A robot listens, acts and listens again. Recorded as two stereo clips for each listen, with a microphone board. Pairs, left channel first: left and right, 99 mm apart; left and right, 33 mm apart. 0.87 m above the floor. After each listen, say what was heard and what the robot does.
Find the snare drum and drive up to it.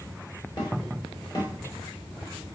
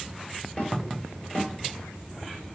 The snare drum: about 40° left or 140° left. Turn 40° left.
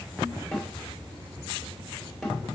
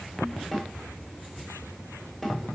Drive 1.0 m forward.
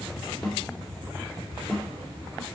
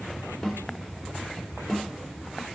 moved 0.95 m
Drive 1.0 m forward.
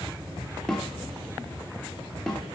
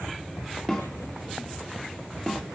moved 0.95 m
Drive 1.0 m forward.
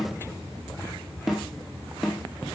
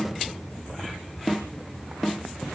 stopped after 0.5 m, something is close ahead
I am next to the snare drum.